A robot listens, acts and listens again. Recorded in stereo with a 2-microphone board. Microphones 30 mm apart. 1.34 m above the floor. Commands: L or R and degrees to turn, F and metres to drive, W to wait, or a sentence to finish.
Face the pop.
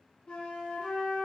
W
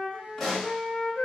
L30
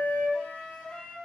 W
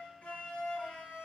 I heard a pop, but can't make it out now. It was about 25° right or 145° left.